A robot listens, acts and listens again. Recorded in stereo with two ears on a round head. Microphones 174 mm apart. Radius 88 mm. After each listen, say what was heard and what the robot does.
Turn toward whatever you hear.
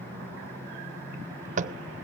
The tapping: about 35° right or 145° right. Turn 35° right.
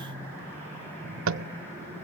So it is at 105° right. Turn 105° right.
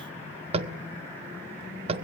The tapping is now 30° right. Turn 30° right.
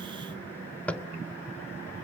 Facing the tapping, under 1 m away.